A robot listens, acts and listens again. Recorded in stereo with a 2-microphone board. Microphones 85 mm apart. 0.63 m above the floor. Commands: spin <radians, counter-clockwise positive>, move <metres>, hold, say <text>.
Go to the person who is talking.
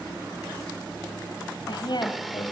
spin 1.05
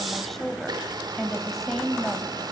move 1.0
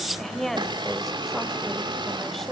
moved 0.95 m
move 1.0
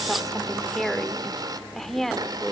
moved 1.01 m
move 1.0
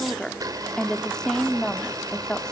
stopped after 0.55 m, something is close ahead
spin 0.17
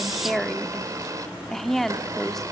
say I am next to the woman speaking.